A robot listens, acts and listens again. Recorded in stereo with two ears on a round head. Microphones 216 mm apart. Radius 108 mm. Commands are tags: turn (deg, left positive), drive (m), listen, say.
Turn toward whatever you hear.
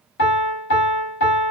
<turn deg="55"/>
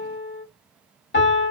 <turn deg="55"/>
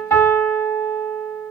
<turn deg="10"/>
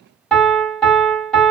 <say>Facing the piano, 1 to 2 m away.</say>